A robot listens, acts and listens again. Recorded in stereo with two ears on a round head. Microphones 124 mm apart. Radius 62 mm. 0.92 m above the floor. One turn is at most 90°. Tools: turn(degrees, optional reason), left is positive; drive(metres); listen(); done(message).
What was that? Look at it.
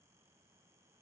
listen()
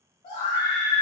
turn(degrees=35, reason="The scream: about 35° left or 145° left.")
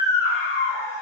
done("Facing the scream.")